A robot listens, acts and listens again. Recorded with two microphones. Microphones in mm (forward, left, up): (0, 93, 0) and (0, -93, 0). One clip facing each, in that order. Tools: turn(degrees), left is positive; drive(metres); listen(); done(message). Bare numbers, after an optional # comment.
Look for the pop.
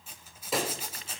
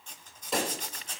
turn(30)
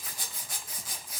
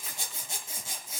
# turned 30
listen()
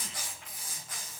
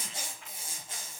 done("I heard a pop, but can't make it out now. It was about 30° right or 150° left.")